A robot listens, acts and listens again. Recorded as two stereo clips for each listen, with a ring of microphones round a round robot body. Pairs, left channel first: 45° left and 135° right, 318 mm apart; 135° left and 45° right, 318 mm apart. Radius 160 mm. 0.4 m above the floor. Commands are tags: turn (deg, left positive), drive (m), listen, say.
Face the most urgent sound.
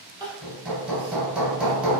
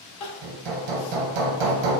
<turn deg="150"/>
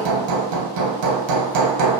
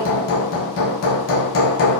<listen/>
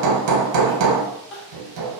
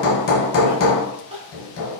<turn deg="25"/>
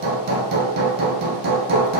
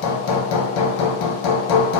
<listen/>
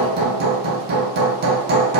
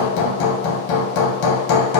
<listen/>
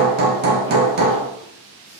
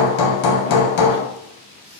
<say>Facing where the crying came from. I can't hear it now.</say>